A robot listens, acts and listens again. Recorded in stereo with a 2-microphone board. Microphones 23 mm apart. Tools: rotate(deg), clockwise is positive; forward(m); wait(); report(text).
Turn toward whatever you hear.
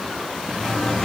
rotate(-20)
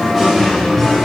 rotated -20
rotate(-30)
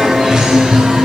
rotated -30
rotate(30)
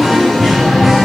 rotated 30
report("Found it: singing, straight ahead.")